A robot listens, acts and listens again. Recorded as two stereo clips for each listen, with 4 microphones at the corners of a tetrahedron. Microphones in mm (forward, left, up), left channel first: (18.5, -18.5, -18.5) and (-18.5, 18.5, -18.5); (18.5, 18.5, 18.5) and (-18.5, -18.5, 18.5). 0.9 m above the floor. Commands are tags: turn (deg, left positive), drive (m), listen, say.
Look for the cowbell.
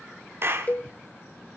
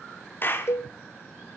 <turn deg="10"/>
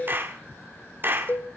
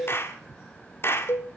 <say>Facing the cowbell, under 1 m away.</say>